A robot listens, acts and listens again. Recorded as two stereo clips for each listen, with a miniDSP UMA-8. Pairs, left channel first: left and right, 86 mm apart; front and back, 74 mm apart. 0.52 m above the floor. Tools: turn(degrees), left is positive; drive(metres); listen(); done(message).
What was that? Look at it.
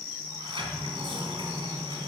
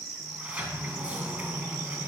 turn(degrees=-105)
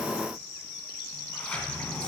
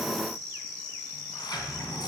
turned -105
turn(degrees=15)
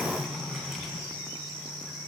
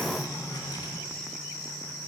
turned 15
done("Found it: a sliding door, straight ahead, 1 to 2 m away.")